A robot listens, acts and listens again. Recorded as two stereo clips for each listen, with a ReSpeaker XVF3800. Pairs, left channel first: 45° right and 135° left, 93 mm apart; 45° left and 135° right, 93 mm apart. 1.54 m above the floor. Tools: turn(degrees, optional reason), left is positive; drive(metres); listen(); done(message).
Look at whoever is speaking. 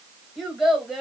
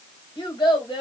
turn(degrees=45, reason="The child speaking: 45° left.")
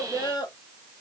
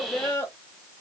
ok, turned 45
turn(degrees=-15, reason="The child speaking is now 15° right.")
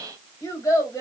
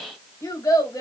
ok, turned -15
done("Found it: a child speaking, straight ahead.")